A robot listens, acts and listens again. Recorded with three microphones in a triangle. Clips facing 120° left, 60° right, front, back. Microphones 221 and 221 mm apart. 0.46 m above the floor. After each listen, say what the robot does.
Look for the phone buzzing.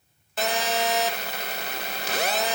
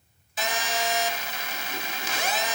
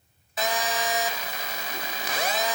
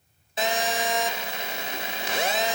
Turn 120° left.
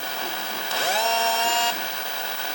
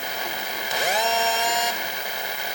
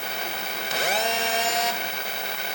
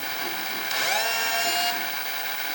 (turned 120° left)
Turn 10° left.
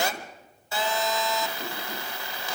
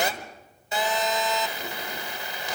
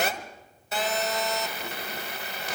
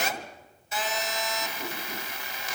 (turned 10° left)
Turn 10° left.
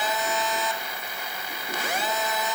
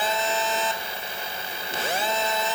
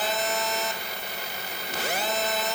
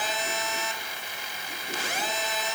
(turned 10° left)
Found it: a phone buzzing, straight ahead.